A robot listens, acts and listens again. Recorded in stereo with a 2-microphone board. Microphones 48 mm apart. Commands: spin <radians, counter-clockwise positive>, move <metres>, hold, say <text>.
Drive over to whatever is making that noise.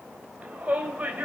spin -0.61
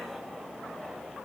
hold
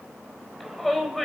move 1.0
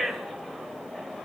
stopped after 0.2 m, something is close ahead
say Something is in my way. I am facing the shout but have not reached it.